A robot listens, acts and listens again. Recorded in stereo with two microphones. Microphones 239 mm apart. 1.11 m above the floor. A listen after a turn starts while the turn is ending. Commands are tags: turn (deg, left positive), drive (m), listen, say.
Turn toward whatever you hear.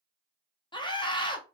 <turn deg="20"/>
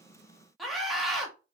<say>Found it: a scream, straight ahead, under 1 m away.</say>